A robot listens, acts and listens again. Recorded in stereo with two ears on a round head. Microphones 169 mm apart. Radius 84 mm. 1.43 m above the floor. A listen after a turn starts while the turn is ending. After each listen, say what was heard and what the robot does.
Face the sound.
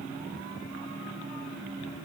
Keep listening.
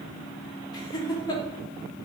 The laughter: about 20° left or 160° left. Turn 20° left.
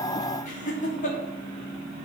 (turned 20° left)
So it is at 135° left. Turn 135° left.
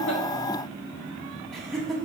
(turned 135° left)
Facing the laughter, 1 to 2 m away.